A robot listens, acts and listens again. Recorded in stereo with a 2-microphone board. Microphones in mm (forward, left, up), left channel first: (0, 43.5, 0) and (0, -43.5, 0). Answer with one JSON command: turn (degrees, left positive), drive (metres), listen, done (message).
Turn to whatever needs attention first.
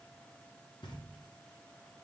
{"listen": true}
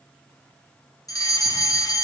{"turn": 45}
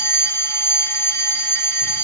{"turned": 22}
{"turn": 35}
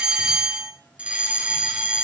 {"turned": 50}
{"turn": -15}
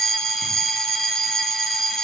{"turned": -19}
{"done": "Found it: a fire alarm, straight ahead, 1 to 2 m away."}